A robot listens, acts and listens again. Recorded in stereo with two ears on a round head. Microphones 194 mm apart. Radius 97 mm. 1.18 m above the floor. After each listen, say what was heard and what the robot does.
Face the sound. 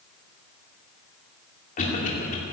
The cough: about 40° left or 140° left. Turn 40° left.
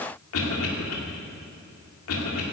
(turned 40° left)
So it is at 100° left. Turn 100° left.
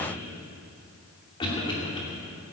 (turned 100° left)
The cough is now 20° left. Turn 20° left.
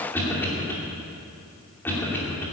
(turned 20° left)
The cough is now 10° left. Turn 10° left.
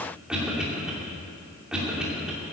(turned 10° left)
Found it: a cough, straight ahead, 2 to 4 m away.